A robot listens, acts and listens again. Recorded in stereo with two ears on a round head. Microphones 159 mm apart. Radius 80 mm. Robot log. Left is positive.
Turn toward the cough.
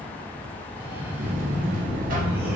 cmd yaw -30
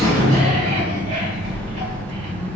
cmd idle
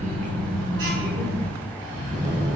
note: So it is at 130° right.
cmd yaw -130
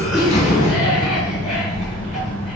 cmd idle
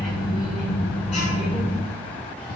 cmd idle
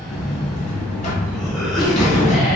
end: Facing the cough.